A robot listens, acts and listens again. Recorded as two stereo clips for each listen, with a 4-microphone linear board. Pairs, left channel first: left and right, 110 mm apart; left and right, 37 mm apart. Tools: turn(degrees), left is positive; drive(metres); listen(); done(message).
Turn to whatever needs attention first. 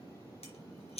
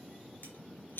listen()
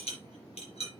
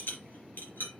listen()
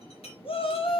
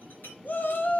turn(degrees=55)
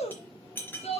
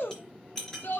turn(degrees=70)
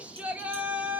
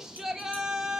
turn(degrees=-15)
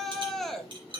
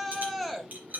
done("Facing the shout.")